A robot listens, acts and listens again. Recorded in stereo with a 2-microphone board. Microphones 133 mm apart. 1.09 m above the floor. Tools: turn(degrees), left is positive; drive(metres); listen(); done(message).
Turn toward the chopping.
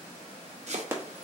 turn(degrees=-55)
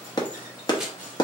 done("Facing the chopping, under 1 m away.")